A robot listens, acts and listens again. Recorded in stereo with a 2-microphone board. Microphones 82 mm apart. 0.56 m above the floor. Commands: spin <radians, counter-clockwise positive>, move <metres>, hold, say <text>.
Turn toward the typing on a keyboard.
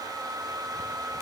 hold
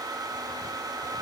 hold
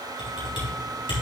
spin 1.57
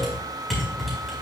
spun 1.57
say Facing the typing on a keyboard, 2 to 4 m away.